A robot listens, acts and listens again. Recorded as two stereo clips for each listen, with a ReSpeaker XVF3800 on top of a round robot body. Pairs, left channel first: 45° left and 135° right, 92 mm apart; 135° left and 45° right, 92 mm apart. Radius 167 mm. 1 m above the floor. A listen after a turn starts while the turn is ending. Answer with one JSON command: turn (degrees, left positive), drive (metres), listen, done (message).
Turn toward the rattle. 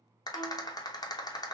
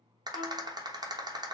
{"done": "Facing the rattle, under 1 m away."}